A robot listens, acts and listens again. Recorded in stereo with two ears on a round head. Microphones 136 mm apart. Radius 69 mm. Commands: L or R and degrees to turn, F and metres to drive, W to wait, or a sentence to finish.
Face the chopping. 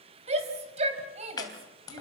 L25
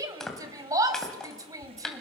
Found it: chopping, straight ahead.